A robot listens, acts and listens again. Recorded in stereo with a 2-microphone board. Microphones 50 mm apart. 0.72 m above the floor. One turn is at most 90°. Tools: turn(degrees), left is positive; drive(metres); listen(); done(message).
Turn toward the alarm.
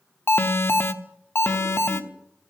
turn(degrees=50)
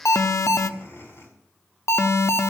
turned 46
turn(degrees=80)
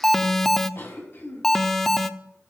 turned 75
done("Facing the alarm.")